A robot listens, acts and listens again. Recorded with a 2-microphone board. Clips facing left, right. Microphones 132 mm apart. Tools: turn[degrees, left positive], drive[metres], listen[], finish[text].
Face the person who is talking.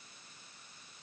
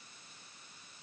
Action: listen[]
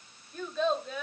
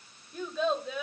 Action: turn[-30]
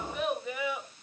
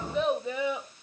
Thought: So it is at 150° right.
Action: turn[-150]
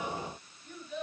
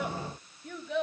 Thought: The child speaking is now 80° right.
Action: turn[-80]
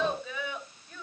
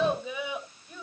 Thought: The child speaking is now 10° right.
Action: turn[-10]
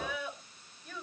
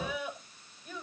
Action: finish[Facing the child speaking, over 4 m away.]